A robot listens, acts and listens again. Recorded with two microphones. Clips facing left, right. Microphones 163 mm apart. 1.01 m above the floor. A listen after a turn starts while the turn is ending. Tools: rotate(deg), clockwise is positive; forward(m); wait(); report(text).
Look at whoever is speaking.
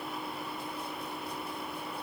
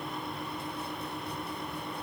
wait()
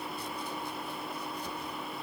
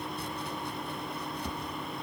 wait()
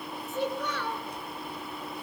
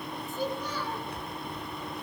rotate(-90)
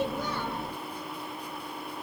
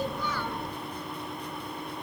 wait()
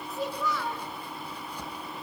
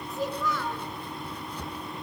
report("Found it: a child speaking, straight ahead, 2 to 4 m away.")